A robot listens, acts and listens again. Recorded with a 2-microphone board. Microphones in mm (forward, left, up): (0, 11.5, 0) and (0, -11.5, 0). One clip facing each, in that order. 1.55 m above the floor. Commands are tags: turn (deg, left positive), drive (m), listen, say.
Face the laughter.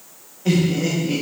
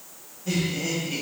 <turn deg="90"/>
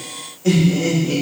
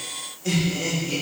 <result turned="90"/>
<turn deg="15"/>
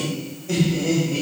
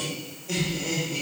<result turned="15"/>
<turn deg="10"/>
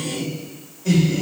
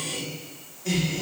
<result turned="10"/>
<say>Facing the laughter, 2 to 4 m away.</say>